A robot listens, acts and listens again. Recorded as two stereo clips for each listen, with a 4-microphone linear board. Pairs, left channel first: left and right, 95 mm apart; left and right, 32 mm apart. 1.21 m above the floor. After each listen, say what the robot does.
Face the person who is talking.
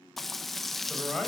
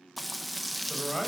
Turn 30° left.
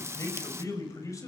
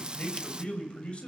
Turn 145° left.
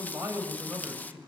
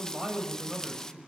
Turn 25° right.
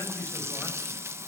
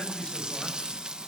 Turn 25° left.
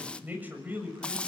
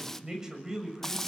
Turn 15° right.
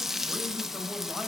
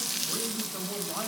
Keep listening.
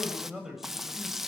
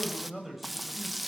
Facing the man speaking.